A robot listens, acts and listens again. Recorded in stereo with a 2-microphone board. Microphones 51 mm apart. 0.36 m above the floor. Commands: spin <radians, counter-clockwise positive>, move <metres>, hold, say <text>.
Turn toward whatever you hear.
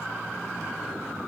hold
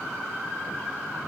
hold
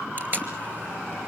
spin -0.70
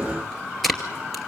say Facing the tape being pulled.